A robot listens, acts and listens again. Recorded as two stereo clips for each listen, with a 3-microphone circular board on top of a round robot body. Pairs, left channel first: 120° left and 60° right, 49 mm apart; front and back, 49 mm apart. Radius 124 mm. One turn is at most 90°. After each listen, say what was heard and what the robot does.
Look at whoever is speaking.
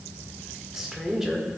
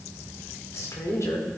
The woman speaking: 20° left. Turn 20° left.
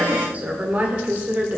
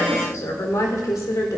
Facing the woman speaking, 1 to 2 m away.